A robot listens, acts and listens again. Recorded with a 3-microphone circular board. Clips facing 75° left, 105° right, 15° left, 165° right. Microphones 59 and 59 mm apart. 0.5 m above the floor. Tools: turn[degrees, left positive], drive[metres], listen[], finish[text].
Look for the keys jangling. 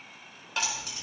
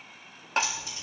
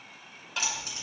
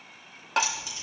Thought: The keys jangling: 50° left.
Action: turn[50]
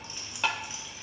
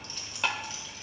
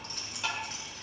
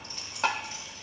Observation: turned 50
Action: finish[Found it: keys jangling, straight ahead, 2 to 4 m away.]